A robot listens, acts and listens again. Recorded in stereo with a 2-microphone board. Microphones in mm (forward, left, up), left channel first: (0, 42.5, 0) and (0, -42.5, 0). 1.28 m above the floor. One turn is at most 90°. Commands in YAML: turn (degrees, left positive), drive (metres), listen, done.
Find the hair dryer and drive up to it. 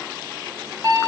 listen: true
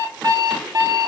listen: true
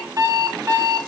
done: "I can't make out a hair dryer to turn to."